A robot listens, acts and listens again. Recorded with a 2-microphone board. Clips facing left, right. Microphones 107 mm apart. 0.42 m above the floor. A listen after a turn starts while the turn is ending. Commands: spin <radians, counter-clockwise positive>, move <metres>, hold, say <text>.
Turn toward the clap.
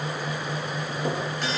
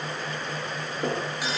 hold
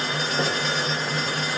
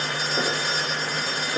hold
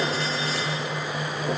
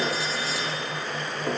say I can't make out a clap to turn to.